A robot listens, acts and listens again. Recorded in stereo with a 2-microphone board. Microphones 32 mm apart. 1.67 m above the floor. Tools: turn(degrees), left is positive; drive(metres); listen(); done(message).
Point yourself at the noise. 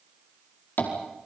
turn(degrees=90)
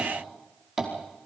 done("Facing the tapping.")